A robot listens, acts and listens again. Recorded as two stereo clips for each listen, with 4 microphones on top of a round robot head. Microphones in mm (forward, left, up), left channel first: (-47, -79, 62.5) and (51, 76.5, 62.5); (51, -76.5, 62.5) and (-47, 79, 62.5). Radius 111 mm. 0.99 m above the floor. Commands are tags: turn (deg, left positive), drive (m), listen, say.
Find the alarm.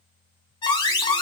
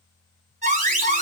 <turn deg="170"/>
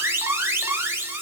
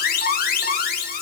<turn deg="-20"/>
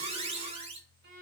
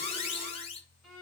<say>Found it: an alarm, straight ahead.</say>